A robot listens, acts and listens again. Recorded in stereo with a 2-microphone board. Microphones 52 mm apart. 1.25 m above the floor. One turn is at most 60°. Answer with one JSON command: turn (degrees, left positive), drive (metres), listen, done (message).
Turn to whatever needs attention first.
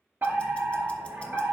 {"turn": -50}
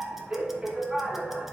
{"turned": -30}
{"turn": -25}
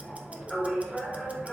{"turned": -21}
{"done": "Found it: a fire alarm, straight ahead, 2 to 4 m away."}